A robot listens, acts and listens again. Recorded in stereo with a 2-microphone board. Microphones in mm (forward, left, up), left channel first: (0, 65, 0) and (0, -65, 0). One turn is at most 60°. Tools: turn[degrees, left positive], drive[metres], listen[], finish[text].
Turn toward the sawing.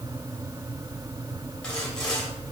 Action: turn[30]
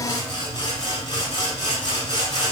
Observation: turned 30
Thought: So it is at 145° left.
Action: turn[60]
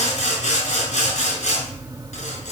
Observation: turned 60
Thought: The sawing is now 100° left.
Action: turn[60]
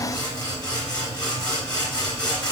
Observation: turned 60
Thought: The sawing is now 35° left.
Action: turn[35]
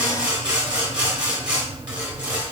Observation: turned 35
Thought: The sawing is now 10° right.
Action: turn[-10]
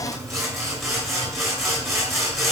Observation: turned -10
Action: finish[Found it: sawing, straight ahead, 2 to 4 m away.]